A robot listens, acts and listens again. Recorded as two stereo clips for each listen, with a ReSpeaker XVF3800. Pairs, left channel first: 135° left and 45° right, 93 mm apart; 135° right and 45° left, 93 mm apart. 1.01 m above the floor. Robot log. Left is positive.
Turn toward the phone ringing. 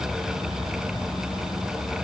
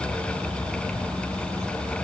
cmd idle
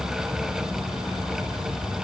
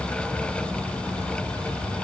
cmd idle
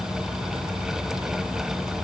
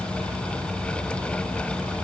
end: I can't make out a phone ringing.